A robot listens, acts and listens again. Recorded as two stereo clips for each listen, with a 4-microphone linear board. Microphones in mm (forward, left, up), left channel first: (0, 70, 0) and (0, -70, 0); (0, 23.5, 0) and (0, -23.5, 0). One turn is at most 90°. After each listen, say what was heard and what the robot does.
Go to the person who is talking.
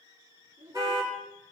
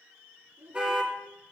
The child speaking: about 70° right or 110° right. Turn 70° right.
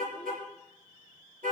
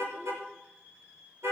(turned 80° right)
Keep listening.
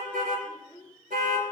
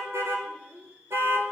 So it is at 30° right. Turn 30° right.
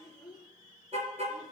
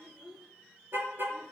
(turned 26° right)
Drive 1.0 m forward.
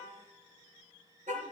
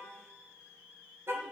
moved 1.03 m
Keep listening.
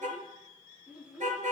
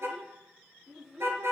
The child speaking is now 10° right. Turn 10° right.
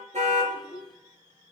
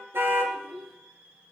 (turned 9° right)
Drive 1.0 m forward.
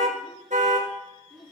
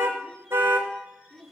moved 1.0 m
Drive 1.0 m forward.
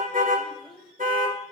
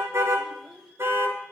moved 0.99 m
Drive 1.0 m forward.
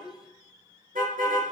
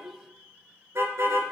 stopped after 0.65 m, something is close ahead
Arrived at the child speaking, straight ahead.